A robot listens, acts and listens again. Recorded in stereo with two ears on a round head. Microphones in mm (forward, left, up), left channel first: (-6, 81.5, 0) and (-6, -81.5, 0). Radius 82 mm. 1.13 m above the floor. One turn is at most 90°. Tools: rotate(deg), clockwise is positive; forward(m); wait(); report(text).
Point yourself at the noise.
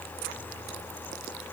wait()
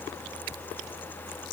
wait()
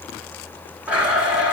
rotate(30)
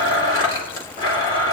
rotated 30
rotate(-25)
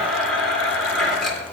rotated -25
report("Facing the blender.")